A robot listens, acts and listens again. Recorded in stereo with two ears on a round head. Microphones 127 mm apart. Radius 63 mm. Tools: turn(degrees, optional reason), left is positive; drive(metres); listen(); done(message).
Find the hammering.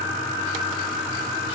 listen()
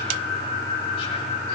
listen()
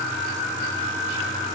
done("I can't make out hammering to turn to.")